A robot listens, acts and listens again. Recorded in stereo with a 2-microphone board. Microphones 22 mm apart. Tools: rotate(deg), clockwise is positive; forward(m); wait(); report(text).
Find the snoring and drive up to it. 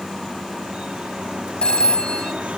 wait()
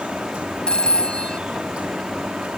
wait()
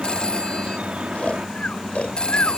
rotate(-90)
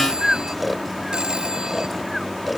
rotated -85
forward(1.0)
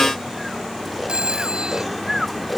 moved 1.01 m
forward(1.0)
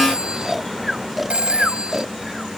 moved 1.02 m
forward(1.0)
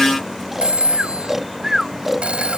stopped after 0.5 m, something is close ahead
rotate(15)
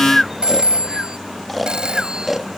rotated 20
report("Arrived at the snoring, straight ahead.")